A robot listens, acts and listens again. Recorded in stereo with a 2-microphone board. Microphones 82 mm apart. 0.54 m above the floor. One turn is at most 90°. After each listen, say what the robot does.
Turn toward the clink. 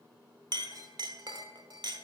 Turn 55° right.
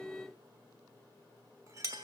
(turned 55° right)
Turn 50° right.
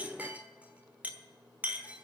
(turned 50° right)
Turn 20° right.
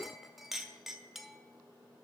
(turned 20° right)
Facing the clink.